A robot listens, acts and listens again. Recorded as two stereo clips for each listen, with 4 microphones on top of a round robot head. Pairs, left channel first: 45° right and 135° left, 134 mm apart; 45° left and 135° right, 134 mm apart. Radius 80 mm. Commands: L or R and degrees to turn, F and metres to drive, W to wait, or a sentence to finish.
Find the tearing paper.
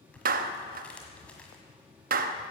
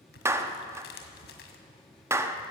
L35
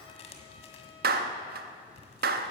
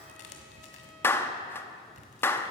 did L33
Facing the tearing paper.